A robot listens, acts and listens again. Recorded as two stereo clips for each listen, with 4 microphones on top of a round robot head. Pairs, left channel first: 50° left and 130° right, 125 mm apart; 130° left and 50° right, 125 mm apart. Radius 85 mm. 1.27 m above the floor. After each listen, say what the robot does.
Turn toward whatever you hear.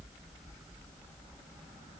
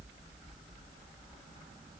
Keep listening.
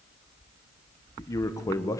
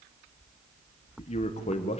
Turn 110° left.
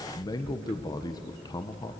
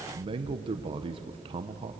Facing the man speaking, 1 to 2 m away.